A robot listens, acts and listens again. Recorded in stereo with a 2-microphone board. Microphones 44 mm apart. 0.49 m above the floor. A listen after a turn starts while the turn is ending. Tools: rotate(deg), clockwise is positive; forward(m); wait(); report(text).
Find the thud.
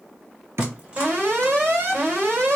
rotate(75)
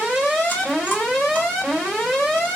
wait()
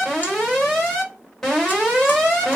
report("I heard a thud, but can't make it out now. It was about straight ahead or 30° right.")